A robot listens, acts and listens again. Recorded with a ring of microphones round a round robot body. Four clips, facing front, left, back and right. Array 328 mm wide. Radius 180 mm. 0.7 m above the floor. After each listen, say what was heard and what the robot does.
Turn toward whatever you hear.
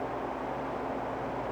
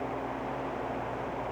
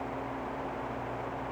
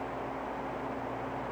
Keep listening.
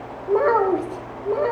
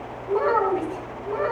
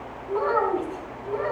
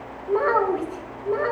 The child speaking: 25° right. Turn 25° right.
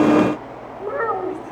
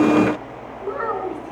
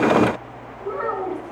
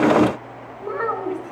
The child speaking is now 10° right. Turn 10° right.
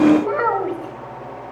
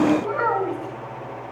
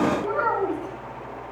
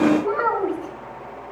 Facing the child speaking.